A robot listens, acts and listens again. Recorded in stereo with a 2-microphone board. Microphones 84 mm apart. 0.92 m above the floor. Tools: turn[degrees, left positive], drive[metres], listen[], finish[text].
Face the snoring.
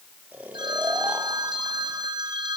Thought: The snoring: about 20° right or 160° right.
Action: turn[-20]
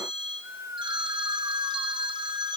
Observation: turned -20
Thought: So it is at 140° right.
Action: turn[-140]
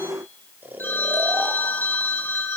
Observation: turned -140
Thought: The snoring is now 25° right.
Action: turn[-25]
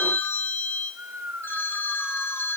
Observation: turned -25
Thought: The snoring is now 25° right.
Action: turn[-25]
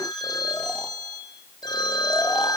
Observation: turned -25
Action: listen[]
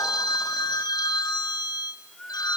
Thought: The snoring is now 10° left.
Action: turn[10]
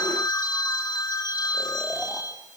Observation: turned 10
Action: listen[]
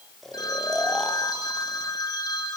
Action: finish[Facing the snoring.]